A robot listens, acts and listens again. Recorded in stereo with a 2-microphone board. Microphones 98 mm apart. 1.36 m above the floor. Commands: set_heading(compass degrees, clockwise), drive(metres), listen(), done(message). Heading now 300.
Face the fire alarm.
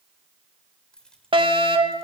set_heading(5)
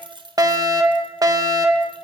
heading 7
set_heading(47)
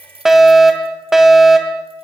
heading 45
done("Facing the fire alarm.")